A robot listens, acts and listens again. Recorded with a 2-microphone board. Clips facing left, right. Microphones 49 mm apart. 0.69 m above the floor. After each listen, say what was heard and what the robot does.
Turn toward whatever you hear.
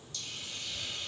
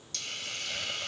The hiss: about 75° right or 105° right. Turn 75° right.
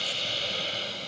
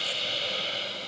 Facing the hiss, 1 to 2 m away.